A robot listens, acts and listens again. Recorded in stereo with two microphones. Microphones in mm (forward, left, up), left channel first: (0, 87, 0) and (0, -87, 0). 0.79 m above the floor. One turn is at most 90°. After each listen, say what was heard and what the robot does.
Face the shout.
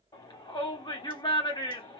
The shout: about 25° left or 155° left. Turn 25° left.
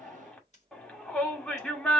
Found it: a shout, straight ahead, 2 to 4 m away.